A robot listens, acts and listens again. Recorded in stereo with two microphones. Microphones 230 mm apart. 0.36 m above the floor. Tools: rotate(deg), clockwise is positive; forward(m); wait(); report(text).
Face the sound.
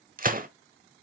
rotate(40)
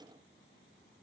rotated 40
wait()
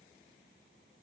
report("I heard a gunshot, but can't make it out now. It was about straight ahead or 100° right.")